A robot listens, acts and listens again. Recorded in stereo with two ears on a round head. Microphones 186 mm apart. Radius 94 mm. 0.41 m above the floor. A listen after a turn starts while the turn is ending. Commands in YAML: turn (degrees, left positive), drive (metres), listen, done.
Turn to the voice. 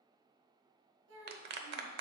turn: -70
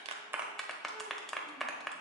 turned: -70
listen: true
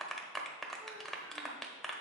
listen: true
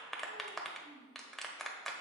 turn: -40
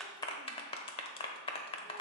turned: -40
listen: true
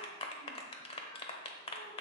listen: true
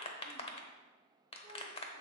done: "I heard a child speaking from this way, but can't make it out now."